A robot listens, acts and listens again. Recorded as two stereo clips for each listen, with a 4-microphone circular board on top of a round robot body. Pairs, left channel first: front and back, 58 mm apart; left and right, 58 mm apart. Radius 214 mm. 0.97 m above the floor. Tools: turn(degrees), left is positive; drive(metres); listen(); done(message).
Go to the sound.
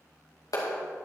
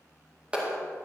turn(degrees=-15)
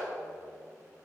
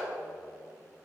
listen()
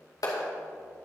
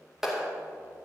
drive(metres=1.0)
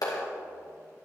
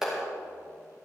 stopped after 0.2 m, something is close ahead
done("Something is in my way. I am facing the clap but have not reached it.")